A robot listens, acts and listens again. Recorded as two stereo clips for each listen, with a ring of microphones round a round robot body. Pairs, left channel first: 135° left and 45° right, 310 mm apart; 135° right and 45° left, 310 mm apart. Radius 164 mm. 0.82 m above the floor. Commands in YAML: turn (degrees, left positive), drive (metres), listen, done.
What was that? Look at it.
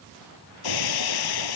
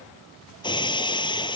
turn: 150
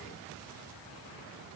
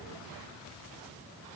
done: "Facing where the breaking glass came from. I can't hear it now."